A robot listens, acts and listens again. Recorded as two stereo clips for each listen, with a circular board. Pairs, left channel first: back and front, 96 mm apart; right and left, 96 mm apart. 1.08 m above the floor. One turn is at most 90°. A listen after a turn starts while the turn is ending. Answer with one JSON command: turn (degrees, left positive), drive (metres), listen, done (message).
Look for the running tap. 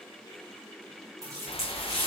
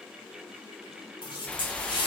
{"turn": -50}
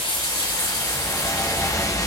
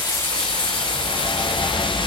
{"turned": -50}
{"turn": -10}
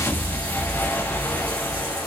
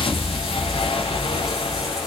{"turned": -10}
{"listen": true}
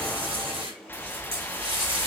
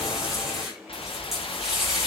{"listen": true}
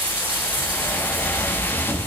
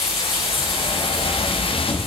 {"done": "I heard a running tap from this way, but can't make it out now."}